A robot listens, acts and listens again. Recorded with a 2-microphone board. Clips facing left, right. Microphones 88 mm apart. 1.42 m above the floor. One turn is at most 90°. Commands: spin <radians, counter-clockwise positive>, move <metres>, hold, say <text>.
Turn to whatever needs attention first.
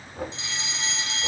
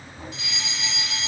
spin 0.52
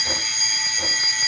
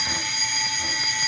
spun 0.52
say Facing the fire alarm.